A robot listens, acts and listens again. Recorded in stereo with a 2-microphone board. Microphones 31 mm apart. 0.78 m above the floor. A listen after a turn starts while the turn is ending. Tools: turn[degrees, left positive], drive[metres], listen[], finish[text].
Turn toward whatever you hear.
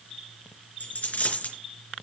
Thought: The dropped coin: about 55° left or 125° left.
Action: turn[55]
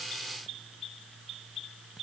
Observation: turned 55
Action: listen[]
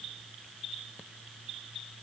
Action: finish[I heard a dropped coin, but can't make it out now. It was about straight ahead or 70° left.]